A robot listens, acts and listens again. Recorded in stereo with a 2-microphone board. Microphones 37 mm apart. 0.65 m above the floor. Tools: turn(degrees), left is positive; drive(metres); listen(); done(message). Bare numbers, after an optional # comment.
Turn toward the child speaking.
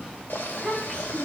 # The child speaking: about 25° left or 155° left.
turn(25)
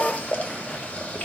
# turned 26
listen()
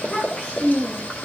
# So it is at 130° left.
turn(130)
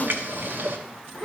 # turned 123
# The child speaking is now 10° left.
turn(10)
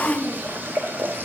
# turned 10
done("Found it: a child speaking, straight ahead, over 4 m away.")